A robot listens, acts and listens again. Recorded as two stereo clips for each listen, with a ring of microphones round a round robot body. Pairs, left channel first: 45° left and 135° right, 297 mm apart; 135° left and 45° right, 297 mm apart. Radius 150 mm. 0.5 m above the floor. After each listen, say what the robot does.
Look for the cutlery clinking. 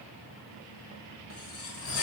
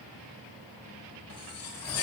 Turn 90° left.
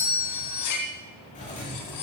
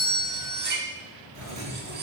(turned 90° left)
Turn 15° left.
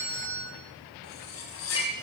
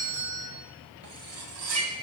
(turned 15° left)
Facing the cutlery clinking.